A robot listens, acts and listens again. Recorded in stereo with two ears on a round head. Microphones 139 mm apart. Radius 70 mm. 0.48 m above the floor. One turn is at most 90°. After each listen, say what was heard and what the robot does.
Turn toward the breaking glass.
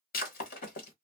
The breaking glass: about 65° left or 115° left. Turn 65° left.
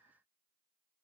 Keep listening.
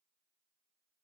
I heard breaking glass, but can't make it out now. It was about straight ahead or 50° left.